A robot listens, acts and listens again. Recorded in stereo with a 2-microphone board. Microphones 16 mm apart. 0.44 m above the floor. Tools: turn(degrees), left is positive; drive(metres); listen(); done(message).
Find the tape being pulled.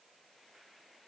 listen()
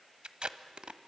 turn(degrees=-60)
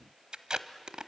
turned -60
turn(degrees=-55)
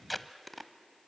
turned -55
done("Found it: tape being pulled, straight ahead.")